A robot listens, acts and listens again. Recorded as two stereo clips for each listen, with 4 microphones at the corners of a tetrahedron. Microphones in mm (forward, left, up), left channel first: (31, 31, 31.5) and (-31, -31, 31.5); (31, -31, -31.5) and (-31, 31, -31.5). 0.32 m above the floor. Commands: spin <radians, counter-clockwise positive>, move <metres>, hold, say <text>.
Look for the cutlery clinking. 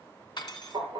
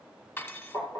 spin 0.26
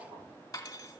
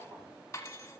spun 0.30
say Facing the cutlery clinking.